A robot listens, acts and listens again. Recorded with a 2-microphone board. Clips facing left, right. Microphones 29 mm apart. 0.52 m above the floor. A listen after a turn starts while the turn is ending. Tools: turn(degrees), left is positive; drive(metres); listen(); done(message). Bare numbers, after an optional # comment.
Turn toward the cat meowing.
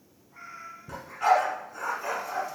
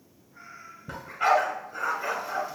turn(90)
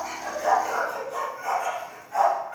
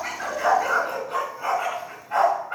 listen()
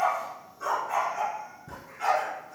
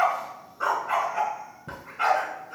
listen()
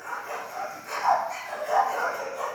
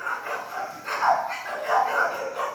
done("I heard a cat meowing from this way, but can't make it out now.")